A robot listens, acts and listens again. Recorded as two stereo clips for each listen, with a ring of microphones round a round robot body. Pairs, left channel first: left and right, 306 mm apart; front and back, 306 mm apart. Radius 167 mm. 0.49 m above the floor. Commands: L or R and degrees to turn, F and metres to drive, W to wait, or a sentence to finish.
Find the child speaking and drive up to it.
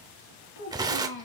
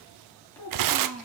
L85
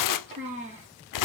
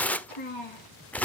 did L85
R20
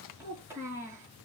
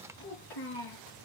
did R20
R10
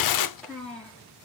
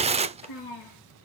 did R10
F1.0
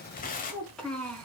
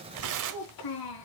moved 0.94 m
F1.0
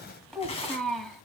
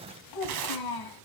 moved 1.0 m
F1.0
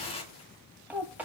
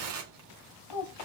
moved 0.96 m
F1.0
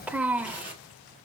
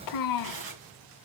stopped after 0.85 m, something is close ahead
Arrived at the child speaking, straight ahead.